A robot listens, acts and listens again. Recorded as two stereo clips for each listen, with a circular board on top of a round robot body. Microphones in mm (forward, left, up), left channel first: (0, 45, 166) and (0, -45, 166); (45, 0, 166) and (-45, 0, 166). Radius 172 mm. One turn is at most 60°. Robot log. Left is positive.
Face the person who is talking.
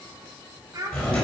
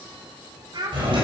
note: The child speaking: 145° right.
cmd yaw -60
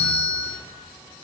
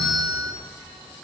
note: Nothing new. It was at 85° right.
cmd yaw -60
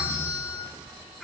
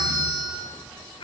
end: Found it: a child speaking, straight ahead.